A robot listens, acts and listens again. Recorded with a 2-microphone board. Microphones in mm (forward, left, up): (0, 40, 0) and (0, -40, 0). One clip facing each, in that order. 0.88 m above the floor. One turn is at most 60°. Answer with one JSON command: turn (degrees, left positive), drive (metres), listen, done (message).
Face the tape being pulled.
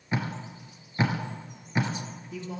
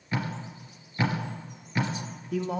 {"turn": 20}
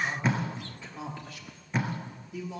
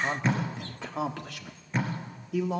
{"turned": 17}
{"done": "Facing the tape being pulled."}